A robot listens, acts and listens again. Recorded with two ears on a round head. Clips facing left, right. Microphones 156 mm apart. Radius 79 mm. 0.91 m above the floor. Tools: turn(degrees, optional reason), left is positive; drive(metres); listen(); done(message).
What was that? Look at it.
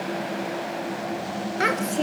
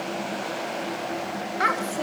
turn(degrees=30, reason="The child speaking: about 30° left or 150° left.")
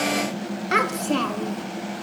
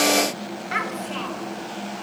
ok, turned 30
turn(degrees=120, reason="So it is at 120° left.")
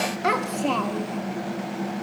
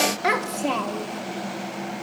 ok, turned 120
done("Facing the child speaking, 1 to 2 m away.")